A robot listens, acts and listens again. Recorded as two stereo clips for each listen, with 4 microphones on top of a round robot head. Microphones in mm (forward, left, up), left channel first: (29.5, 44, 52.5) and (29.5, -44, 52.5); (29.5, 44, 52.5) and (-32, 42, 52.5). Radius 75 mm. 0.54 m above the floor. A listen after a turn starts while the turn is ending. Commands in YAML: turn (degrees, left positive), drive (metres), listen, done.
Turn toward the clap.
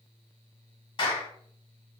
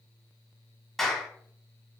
turn: 90
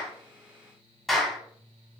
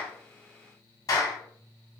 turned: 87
done: "Facing the clap."